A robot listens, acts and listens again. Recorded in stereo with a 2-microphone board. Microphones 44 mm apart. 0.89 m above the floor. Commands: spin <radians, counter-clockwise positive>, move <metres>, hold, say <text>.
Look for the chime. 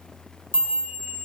spin 0.96
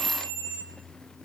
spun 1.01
spin 1.05
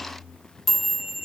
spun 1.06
say Facing the chime, 1 to 2 m away.